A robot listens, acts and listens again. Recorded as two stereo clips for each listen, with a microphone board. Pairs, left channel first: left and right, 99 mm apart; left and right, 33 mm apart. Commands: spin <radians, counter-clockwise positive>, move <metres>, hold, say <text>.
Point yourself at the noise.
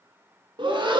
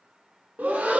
spin -0.96
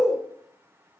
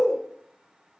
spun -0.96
say Found it: breathing, straight ahead, under 1 m away.